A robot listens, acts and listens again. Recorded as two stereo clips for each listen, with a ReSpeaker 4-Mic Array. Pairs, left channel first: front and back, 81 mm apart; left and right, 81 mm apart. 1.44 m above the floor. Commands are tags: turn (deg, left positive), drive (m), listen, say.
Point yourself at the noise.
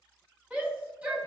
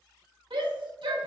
<turn deg="-105"/>
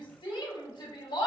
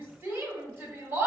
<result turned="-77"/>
<turn deg="-30"/>
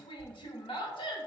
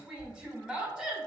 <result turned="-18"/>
<turn deg="-10"/>
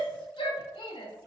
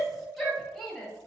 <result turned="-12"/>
<say>Found it: a shout, straight ahead, 1 to 2 m away.</say>